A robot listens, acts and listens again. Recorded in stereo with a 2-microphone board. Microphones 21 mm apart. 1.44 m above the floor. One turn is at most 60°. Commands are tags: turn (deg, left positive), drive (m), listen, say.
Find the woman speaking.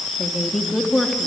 <turn deg="30"/>
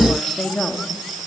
<turn deg="60"/>
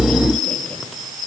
<turn deg="60"/>
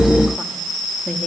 <turn deg="25"/>
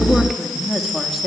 <turn deg="-10"/>
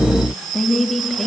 <say>Facing the woman speaking.</say>